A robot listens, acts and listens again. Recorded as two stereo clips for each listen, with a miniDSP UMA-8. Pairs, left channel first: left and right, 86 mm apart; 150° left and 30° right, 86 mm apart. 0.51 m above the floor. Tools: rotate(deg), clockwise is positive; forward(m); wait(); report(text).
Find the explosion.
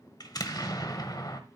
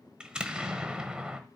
rotate(-50)
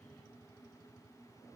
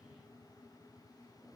report("Facing where the explosion came from. I can't hear it now.")